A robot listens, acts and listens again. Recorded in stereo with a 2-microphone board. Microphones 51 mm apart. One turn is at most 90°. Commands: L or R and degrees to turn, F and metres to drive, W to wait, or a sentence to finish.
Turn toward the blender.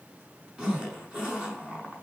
W
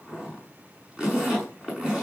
W
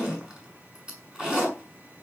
I can't make out a blender to turn to.